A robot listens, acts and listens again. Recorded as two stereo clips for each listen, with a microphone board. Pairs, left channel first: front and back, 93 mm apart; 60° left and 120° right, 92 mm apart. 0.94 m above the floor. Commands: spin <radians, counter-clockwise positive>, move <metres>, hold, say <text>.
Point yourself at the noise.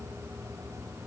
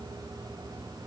hold
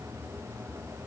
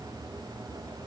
hold
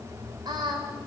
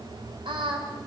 spin -2.53
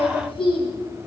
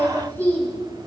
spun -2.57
spin -0.26
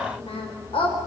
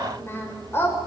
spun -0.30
say Facing the singing, over 4 m away.